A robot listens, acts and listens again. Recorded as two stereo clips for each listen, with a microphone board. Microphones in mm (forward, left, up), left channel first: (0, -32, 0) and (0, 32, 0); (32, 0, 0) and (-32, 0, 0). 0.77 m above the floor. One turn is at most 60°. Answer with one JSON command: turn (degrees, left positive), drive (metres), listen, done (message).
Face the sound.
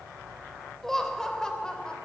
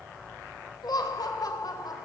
{"turn": -15}
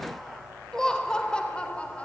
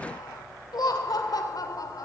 {"turn": -20}
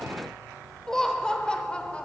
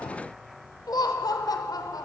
{"turn": -20}
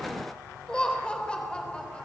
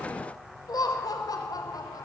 {"turn": -15}
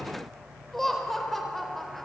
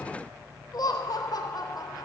{"done": "Facing the laughter, 2 to 4 m away."}